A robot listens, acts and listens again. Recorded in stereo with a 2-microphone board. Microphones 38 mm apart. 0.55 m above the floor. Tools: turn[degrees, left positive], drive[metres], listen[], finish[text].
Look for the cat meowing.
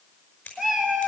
Action: turn[-30]
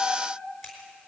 Thought: So it is at 140° right.
Action: turn[-140]
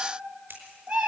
Thought: The cat meowing is now 40° right.
Action: turn[-40]
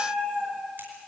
Thought: The cat meowing is now 20° right.
Action: turn[-20]
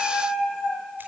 Action: finish[Found it: a cat meowing, straight ahead, over 4 m away.]